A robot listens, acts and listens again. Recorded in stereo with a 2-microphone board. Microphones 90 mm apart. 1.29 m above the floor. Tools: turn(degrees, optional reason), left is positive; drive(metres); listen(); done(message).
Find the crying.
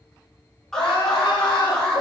turn(degrees=60, reason="The crying: about 60° left or 120° left.")
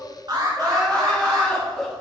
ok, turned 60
done("Found it: crying, straight ahead.")